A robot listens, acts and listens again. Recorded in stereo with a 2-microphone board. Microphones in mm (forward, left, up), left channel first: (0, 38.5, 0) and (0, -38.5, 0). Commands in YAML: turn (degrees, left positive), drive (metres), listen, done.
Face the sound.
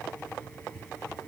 listen: true
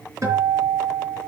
turn: -45
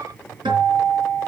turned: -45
turn: -95
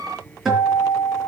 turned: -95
done: "Found it: a guitar, straight ahead, over 4 m away."